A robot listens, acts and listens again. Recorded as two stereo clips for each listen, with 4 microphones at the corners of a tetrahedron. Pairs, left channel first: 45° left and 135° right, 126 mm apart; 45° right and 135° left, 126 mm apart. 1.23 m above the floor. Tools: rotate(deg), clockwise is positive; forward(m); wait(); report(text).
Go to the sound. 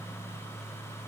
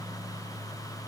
wait()
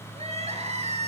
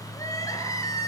rotate(105)
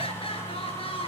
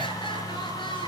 forward(1.0)
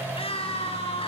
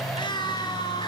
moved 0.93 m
forward(1.0)
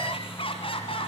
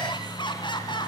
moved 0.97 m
forward(1.0)
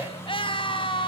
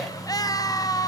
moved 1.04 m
rotate(-10)
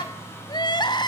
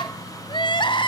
forward(1.0)
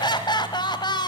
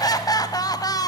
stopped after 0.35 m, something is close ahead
report("Arrived at the crying, straight ahead.")